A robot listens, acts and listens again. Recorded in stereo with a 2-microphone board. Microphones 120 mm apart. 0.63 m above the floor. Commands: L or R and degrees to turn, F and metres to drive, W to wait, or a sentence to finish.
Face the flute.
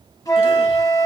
L30
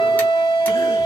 L120
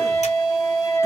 L25
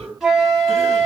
Facing the flute.